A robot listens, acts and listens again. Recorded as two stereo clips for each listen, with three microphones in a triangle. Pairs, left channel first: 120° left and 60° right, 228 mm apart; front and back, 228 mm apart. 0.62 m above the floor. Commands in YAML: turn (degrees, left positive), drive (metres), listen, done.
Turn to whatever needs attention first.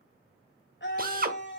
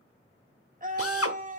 turn: 135
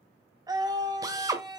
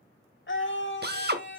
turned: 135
turn: 10
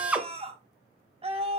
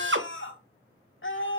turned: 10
done: "Found it: a scream, straight ahead."